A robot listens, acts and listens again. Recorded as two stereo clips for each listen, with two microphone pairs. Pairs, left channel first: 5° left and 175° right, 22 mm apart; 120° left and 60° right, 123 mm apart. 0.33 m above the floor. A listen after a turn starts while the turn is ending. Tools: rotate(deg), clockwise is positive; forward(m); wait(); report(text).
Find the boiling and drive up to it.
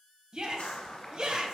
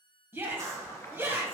rotate(-55)
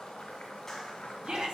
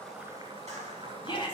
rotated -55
rotate(15)
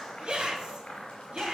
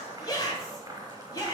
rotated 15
forward(1.0)
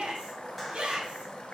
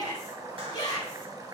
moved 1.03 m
forward(1.0)
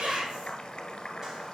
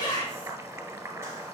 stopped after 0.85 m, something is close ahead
report("Arrived at the boiling, straight ahead.")